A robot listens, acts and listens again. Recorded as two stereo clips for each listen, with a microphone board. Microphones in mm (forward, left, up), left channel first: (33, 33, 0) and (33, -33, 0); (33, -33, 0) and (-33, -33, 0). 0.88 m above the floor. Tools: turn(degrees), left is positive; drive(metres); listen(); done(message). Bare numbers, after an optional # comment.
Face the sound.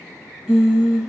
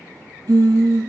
# The singing: 170° right.
turn(-170)
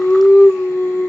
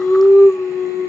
# The singing is now 35° left.
turn(35)
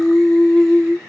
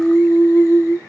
done("Facing the singing.")